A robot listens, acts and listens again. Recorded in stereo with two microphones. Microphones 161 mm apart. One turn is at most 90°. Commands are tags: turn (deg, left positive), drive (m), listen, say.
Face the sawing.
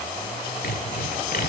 <turn deg="70"/>
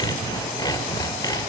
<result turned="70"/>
<turn deg="25"/>
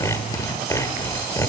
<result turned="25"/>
<turn deg="20"/>
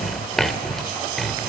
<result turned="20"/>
<say>Facing the sawing, 1 to 2 m away.</say>